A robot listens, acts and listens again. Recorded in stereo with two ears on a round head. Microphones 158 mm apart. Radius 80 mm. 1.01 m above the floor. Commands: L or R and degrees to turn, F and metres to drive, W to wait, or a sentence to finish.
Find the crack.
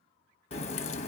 L35
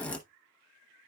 L10
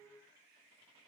I heard a crack from this way, but can't make it out now.